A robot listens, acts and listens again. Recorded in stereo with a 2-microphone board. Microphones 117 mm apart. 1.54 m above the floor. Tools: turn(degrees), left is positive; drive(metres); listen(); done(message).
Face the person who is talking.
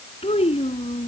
turn(degrees=60)
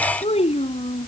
turn(degrees=65)
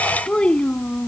turn(degrees=10)
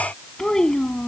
done("Found it: a child speaking, straight ahead.")